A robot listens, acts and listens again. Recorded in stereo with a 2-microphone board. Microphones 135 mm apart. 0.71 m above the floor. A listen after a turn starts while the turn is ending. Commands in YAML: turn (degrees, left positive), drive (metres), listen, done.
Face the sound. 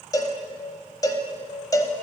turn: 25
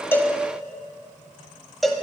done: "Facing the cowbell, under 1 m away."